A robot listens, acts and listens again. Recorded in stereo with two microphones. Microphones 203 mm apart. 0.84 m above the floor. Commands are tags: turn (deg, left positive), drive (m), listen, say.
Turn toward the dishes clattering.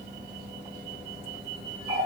<listen/>
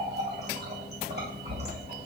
<listen/>
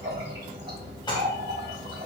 <turn deg="25"/>
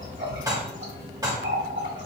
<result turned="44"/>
<turn deg="-20"/>
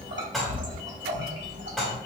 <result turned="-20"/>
<say>Facing the dishes clattering.</say>